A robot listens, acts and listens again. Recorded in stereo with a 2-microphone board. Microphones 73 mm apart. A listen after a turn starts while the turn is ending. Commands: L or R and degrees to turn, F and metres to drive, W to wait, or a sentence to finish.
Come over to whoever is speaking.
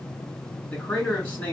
L20
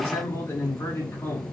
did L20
L140
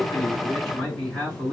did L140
F1.0
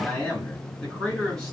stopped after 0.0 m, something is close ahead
L10
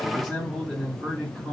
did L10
Something is in my way. I am facing the man speaking but have not reached it.